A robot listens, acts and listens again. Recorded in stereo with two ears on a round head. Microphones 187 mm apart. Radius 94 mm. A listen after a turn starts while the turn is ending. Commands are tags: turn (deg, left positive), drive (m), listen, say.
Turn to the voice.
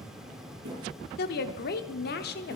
<turn deg="50"/>
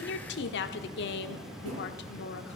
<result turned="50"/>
<turn deg="70"/>
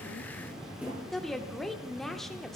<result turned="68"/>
<say>Found it: a woman speaking, straight ahead, 1 to 2 m away.</say>